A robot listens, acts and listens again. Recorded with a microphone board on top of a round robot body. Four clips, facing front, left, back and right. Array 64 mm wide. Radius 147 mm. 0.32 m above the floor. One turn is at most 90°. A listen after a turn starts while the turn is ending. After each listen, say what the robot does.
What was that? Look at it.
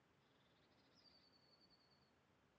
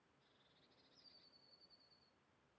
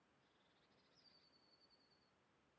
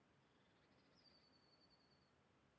Keep listening.
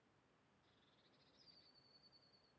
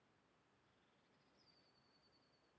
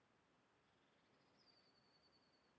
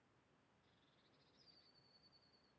Keep listening.
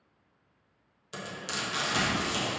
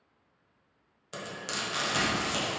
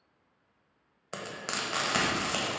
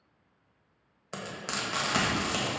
Turn 90° right.
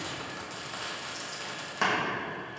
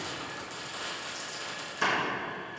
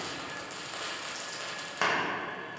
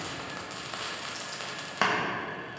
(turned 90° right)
Turn 90° right.
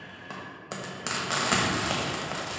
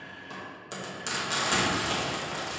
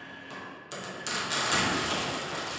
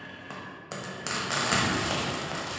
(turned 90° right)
Turn 25° right.
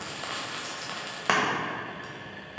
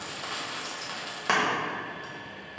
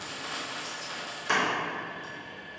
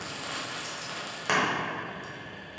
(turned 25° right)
Turn 10° left.
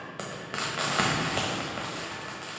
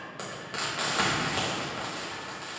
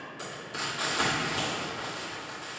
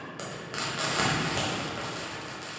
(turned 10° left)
Facing the frying.